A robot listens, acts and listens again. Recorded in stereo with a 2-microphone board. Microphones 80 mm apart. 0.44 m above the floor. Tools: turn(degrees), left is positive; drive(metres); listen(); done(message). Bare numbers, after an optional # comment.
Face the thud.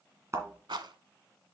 # The thud: about 40° right or 140° right.
turn(-40)
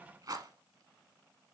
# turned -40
listen()
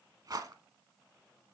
done("I heard a thud, but can't make it out now. It was about straight ahead or 100° right.")